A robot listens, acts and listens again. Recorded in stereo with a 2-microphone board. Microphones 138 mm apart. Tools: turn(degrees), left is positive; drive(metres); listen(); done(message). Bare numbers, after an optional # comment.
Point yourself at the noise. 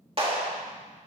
# The clap: about 40° right or 140° right.
turn(-40)
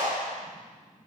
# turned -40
# So it is at 100° right.
turn(-100)
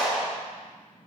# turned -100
done("Found it: a clap, straight ahead.")